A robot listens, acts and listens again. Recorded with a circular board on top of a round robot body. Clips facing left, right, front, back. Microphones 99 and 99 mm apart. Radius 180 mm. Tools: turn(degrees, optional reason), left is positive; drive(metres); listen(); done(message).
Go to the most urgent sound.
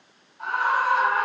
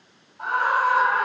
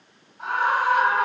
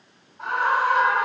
turn(degrees=-130, reason="The scream: 130° right.")
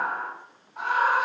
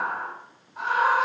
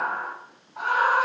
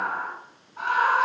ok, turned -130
drive(metres=1.0)
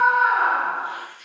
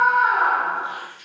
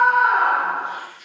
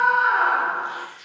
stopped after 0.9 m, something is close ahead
done("I am next to the scream.")